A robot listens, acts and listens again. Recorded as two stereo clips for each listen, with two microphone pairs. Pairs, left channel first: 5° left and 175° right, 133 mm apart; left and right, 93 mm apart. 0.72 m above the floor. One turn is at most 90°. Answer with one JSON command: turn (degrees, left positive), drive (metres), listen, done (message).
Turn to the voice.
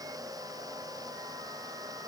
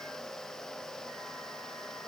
{"listen": true}
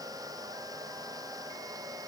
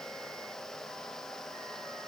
{"listen": true}
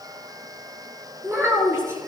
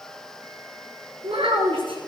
{"turn": -90}
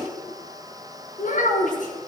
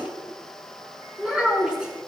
{"turn": -10}
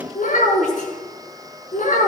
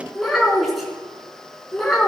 {"done": "Found it: a child speaking, straight ahead, over 4 m away."}